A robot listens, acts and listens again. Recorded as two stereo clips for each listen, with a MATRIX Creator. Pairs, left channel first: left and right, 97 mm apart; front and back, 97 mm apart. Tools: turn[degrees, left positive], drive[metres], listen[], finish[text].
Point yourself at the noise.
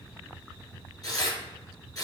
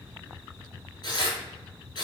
Thought: The tearing paper: 40° left.
Action: turn[40]
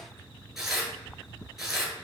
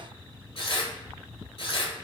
Action: finish[Found it: tearing paper, straight ahead.]